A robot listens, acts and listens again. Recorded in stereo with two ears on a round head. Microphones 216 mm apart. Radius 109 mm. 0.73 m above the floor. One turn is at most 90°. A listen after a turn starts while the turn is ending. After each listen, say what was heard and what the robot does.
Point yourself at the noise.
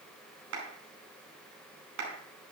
The clap: about 60° right or 120° right. Turn 60° right.
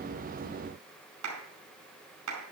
So it is at 60° right. Turn 60° right.
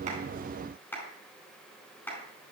The clap is now 10° left. Turn 10° left.
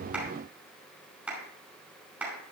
Facing the clap, over 4 m away.